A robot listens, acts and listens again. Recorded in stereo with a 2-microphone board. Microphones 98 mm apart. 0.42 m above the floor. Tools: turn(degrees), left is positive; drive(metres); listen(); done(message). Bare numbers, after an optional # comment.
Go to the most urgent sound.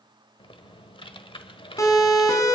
# The siren: about 30° left or 150° left.
turn(30)
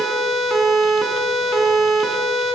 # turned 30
drive(1.0)
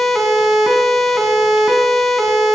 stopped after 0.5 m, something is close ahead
done("Blocked. The siren is further on, straight ahead.")